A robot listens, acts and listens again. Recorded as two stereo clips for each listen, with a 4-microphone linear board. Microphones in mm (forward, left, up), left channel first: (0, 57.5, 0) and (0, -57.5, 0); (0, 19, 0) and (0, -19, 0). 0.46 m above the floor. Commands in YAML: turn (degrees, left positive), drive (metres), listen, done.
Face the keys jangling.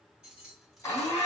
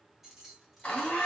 turn: -30
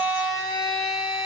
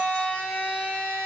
listen: true
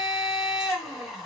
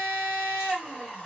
listen: true
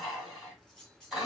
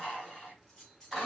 turn: 30
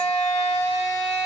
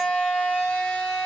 listen: true
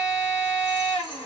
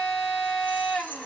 listen: true
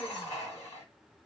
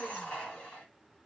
done: "I heard keys jangling, but can't make it out now. It was about 25° right or 145° left."